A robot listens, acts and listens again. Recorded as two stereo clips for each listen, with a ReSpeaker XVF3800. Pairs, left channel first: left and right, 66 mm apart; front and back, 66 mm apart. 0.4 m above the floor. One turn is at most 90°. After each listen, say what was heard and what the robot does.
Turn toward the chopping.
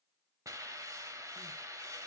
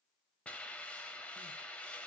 Keep listening.
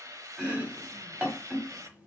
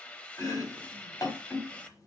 The chopping: 25° right. Turn 25° right.
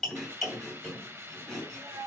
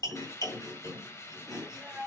Found it: chopping, straight ahead, 2 to 4 m away.